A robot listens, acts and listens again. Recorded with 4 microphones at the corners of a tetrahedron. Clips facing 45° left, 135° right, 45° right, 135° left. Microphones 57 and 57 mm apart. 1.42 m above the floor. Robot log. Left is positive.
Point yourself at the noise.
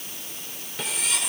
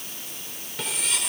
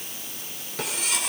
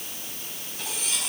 note: The cutlery clinking: 40° right.
cmd yaw -40
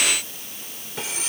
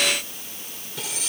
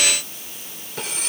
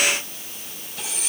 note: The cutlery clinking is now 10° right.
cmd yaw -10
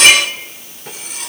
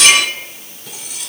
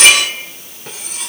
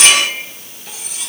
end: Facing the cutlery clinking.